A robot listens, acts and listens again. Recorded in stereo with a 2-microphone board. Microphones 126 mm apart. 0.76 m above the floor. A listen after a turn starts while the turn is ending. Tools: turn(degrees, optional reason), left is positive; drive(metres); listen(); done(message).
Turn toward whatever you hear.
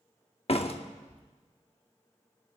turn(degrees=50, reason="The door slam: about 50° left or 130° left.")
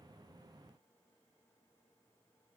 listen()
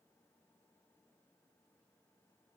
done("I heard a door slam, but can't make it out now. It was about straight ahead or 80° left.")